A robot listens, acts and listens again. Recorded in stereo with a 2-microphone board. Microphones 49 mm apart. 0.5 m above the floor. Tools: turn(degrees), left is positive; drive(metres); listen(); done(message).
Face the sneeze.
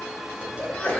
turn(degrees=20)
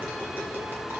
listen()
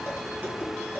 done("I heard a sneeze, but can't make it out now. It was about straight ahead or 140° left.")